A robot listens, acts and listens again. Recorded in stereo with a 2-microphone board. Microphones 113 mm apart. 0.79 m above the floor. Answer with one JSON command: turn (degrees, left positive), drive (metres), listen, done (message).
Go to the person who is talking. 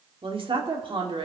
{"turn": -50}
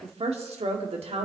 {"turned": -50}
{"turn": -75}
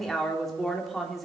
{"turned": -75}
{"drive": 1.0}
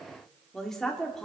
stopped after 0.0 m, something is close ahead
{"done": "Blocked. The woman speaking is further on, straight ahead."}